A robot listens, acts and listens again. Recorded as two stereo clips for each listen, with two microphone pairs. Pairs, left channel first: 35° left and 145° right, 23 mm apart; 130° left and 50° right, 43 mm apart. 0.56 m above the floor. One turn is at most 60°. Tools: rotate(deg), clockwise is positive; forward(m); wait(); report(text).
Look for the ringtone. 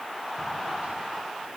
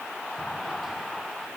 wait()
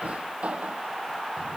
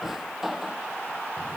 wait()
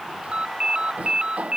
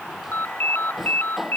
rotate(-60)
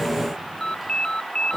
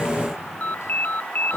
rotate(-60)
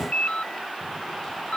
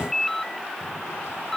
rotate(-45)
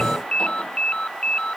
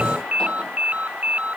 report("Facing the ringtone.")